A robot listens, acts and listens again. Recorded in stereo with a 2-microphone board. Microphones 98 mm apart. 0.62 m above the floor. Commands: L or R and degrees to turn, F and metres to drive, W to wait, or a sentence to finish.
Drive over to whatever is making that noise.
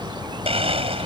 R75
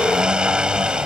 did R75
R10
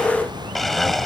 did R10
F1.0
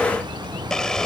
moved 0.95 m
F1.0
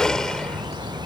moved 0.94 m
F1.0
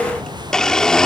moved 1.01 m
L10
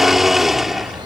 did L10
F1.0
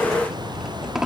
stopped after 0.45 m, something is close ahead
R10
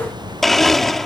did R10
Arrived at the blender, straight ahead.